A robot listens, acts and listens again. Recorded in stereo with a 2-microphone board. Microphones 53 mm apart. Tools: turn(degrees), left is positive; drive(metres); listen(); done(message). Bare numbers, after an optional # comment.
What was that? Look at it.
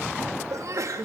turn(-90)
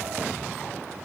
done("I heard a sneeze from this way, but can't make it out now.")